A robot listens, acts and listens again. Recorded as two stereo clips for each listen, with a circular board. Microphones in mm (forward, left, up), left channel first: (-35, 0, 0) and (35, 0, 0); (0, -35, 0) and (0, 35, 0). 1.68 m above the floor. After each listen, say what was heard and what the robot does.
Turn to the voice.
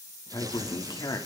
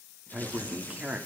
The man speaking: 160° left. Turn 160° left.
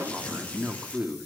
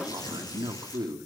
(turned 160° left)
The man speaking is now 80° left. Turn 80° left.
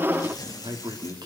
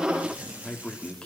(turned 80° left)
The man speaking is now 15° right. Turn 15° right.
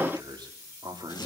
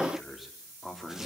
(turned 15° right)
Found it: a man speaking, straight ahead, over 4 m away.